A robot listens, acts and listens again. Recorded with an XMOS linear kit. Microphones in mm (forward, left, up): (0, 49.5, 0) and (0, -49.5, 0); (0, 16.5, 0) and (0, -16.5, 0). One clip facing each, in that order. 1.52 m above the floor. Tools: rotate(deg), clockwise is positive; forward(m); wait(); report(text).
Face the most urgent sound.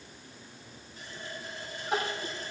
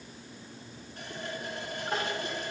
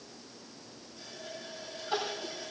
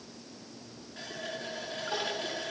rotate(-30)
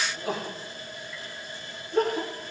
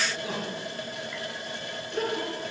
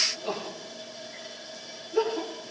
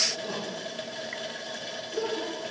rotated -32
rotate(-140)
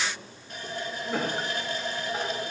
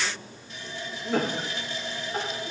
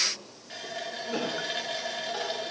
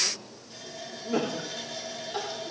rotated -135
report("Found it: crying, straight ahead.")